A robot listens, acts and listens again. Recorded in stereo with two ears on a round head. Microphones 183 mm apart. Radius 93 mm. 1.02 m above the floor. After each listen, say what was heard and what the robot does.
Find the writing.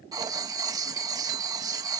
The writing: about 15° right or 165° right. Turn 15° right.
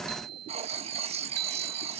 So it is at 150° right. Turn 150° right.
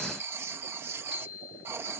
The writing is now 10° right. Turn 10° right.
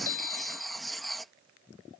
Found it: writing, straight ahead.